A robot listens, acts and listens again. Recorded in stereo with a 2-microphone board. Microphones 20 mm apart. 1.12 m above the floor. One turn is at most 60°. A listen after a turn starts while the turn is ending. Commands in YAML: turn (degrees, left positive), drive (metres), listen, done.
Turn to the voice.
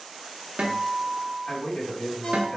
turn: 60
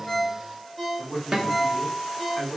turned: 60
turn: 25
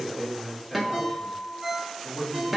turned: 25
done: "Facing the man speaking."